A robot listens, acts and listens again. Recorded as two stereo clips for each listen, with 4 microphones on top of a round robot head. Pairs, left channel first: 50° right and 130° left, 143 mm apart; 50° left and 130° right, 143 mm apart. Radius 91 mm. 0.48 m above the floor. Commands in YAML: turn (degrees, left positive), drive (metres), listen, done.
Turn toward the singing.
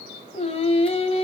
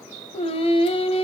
done: "Facing the singing, 1 to 2 m away."